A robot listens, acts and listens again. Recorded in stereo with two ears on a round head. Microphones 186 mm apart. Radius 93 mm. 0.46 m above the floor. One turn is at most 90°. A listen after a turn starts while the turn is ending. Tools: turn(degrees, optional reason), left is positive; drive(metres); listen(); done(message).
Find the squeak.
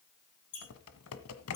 turn(degrees=55, reason="The squeak: about 55° left or 125° left.")
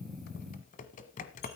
listen()
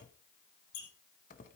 turn(degrees=70, reason="So it is at 70° left.")
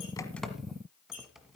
turn(degrees=30, reason="The squeak is now 30° left.")
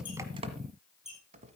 done("Facing the squeak.")